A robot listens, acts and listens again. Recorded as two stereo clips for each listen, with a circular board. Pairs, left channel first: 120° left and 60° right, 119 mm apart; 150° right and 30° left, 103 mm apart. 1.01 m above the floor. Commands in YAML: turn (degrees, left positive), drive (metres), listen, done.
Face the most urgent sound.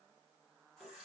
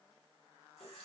listen: true
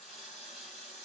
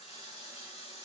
listen: true
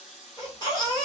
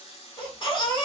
turn: 170
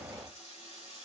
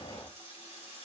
listen: true
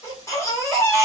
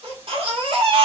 turn: 55
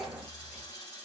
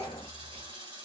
turn: 25
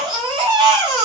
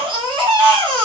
turn: -10
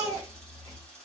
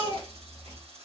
done: "Facing the baby crying."